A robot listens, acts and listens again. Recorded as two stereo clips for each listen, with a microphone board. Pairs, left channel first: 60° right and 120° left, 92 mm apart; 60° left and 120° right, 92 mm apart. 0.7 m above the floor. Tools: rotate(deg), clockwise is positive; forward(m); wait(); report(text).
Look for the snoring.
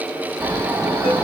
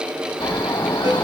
rotate(-60)
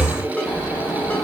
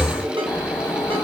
report("Found it: snoring, straight ahead.")